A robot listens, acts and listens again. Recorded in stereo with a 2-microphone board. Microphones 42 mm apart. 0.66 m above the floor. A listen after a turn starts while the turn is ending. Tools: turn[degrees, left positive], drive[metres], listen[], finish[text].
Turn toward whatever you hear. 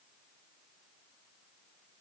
Action: listen[]
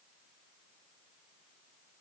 Action: listen[]
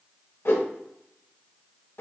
Thought: The whoosh: about 65° left or 115° left.
Action: turn[65]
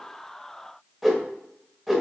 Action: finish[Facing the whoosh.]